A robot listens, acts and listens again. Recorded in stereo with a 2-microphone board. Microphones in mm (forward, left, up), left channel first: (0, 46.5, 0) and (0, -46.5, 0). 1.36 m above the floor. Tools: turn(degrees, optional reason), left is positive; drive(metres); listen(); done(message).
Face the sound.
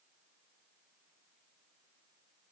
listen()
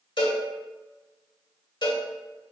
turn(degrees=60, reason="The cowbell: about 60° left or 120° left.")
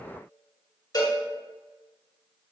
turn(degrees=50, reason="So it is at 50° left.")
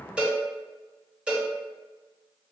turn(degrees=-10, reason="The cowbell is now 10° right.")
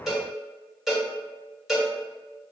done("Found it: a cowbell, straight ahead, 1 to 2 m away.")